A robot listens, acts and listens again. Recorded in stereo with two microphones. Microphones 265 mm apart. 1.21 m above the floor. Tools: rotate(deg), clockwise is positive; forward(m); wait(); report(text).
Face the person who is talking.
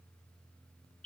wait()
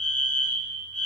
wait()
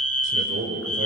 rotate(50)
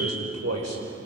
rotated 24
rotate(105)
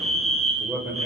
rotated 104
report("Facing the man speaking.")